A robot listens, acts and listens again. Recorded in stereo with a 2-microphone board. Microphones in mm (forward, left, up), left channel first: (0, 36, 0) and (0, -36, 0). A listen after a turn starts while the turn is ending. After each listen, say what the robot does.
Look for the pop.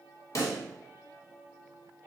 Turn 50° left.
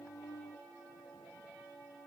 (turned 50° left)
Keep listening.
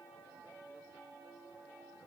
I heard a pop, but can't make it out now. It was about straight ahead or 80° left.